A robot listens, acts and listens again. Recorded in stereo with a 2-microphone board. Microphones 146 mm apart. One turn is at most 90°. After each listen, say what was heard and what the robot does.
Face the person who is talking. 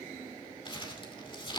Keep listening.
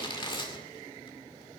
Keep listening.
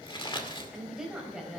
Turn 30° right.
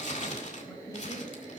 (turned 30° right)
So it is at 20° left. Turn 20° left.
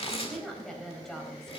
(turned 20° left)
Found it: a woman speaking, straight ahead, 2 to 4 m away.